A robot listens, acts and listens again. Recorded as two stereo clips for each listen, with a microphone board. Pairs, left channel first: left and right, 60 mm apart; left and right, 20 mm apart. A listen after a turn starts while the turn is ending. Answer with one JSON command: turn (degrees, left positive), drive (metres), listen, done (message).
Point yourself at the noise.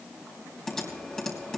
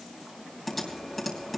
{"turn": 30}
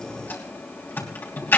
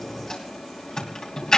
{"turn": 140}
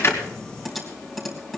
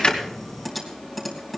{"done": "Facing the typing on a keyboard."}